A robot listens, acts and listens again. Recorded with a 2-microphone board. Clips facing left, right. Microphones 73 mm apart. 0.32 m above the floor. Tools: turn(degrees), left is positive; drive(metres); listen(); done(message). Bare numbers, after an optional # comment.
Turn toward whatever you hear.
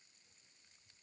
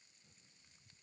listen()
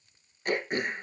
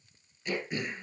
# The throat clearing: about 50° left or 130° left.
turn(50)
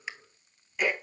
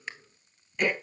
done("Found it: throat clearing, straight ahead, 1 to 2 m away.")